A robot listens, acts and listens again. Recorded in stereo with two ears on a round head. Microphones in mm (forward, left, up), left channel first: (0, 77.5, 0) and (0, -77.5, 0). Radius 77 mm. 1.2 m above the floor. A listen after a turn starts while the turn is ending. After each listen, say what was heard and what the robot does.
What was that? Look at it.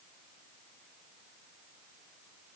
Keep listening.
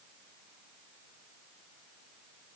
Keep listening.
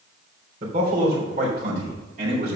The man speaking: about 45° right or 135° right. Turn 45° right.
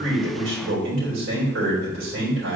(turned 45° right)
So it is at 90° right. Turn 90° right.
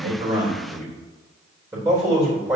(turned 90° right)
The man speaking is now 20° right. Turn 20° right.
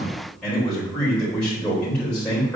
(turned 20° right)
Facing the man speaking, 2 to 4 m away.